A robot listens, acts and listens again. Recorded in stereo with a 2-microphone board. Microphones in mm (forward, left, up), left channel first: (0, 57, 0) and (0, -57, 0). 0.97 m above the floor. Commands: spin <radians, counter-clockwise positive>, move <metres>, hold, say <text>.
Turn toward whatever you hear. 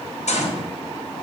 spin 1.57
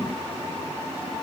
say I heard a gunshot from this way, but can't make it out now.